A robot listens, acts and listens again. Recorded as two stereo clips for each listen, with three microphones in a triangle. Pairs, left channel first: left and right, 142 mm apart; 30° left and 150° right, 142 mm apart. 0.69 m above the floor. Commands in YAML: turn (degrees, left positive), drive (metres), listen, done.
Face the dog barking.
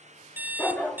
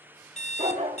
turn: 170
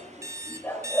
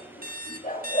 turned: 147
turn: 15
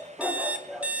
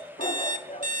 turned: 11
done: "Facing the dog barking."